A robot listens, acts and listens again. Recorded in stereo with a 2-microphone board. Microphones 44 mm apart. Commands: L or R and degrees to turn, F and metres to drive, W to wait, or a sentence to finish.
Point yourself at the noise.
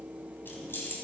L55
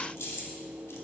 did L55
L70
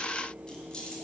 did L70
L20
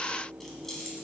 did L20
Found it: keys jangling, straight ahead.